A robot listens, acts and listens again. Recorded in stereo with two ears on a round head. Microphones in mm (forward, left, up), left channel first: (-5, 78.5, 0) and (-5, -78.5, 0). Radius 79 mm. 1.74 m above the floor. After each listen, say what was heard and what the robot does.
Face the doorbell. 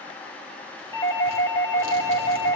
The doorbell: about 25° left or 155° left. Turn 25° left.
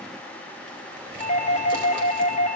So it is at 130° left. Turn 130° left.
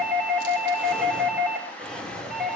Facing the doorbell.